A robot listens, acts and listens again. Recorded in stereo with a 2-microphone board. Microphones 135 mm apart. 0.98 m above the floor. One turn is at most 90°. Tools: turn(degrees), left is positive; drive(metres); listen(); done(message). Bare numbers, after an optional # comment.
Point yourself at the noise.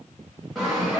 turn(30)
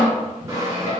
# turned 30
# So it is at 25° right.
turn(-25)
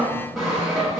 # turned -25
done("Found it: sawing, straight ahead.")